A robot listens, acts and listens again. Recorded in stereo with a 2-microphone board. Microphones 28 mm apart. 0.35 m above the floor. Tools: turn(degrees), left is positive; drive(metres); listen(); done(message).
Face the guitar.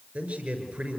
listen()
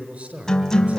turn(degrees=30)
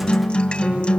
turn(degrees=135)
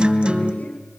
turn(degrees=-45)
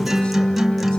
done("Facing the guitar, 2 to 4 m away.")